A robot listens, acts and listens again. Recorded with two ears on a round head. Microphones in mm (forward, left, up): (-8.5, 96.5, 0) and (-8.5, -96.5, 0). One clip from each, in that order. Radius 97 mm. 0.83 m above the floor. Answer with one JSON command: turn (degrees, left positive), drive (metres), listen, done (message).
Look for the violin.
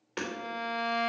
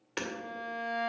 {"turn": 55}
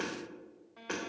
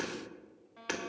{"done": "Facing the violin, 1 to 2 m away."}